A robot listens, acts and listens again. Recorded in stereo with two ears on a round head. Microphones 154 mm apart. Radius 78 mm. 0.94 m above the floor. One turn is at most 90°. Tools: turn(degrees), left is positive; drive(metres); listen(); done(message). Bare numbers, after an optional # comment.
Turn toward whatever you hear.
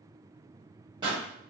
# The pop: about 25° right or 155° right.
turn(-25)
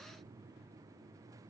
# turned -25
listen()
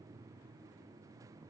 done("I heard a pop, but can't make it out now. It was about straight ahead or 130° right.")